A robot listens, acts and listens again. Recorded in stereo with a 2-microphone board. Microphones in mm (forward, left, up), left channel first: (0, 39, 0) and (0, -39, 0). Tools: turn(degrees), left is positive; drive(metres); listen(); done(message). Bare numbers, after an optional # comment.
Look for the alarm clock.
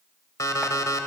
# The alarm clock: about 50° left or 130° left.
turn(50)
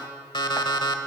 # So it is at 85° left.
turn(85)
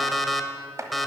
done("Facing the alarm clock, 1 to 2 m away.")